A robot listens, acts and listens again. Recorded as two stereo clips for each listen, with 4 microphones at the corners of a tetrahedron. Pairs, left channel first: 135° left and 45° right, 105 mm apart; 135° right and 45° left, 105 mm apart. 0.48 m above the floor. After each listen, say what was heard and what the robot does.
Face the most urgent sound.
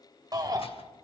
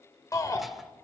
The shout: 85° right. Turn 85° right.
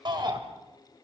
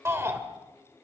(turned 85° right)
The shout is now 15° right. Turn 15° right.
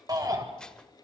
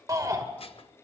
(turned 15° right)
Found it: a shout, straight ahead, 2 to 4 m away.